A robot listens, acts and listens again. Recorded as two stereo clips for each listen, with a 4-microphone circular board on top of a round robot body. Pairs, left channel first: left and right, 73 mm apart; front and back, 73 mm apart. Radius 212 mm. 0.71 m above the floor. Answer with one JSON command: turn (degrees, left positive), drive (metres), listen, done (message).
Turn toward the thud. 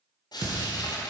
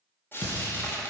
{"turn": -65}
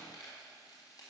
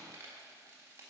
{"done": "Facing where the thud came from. I can't hear it now."}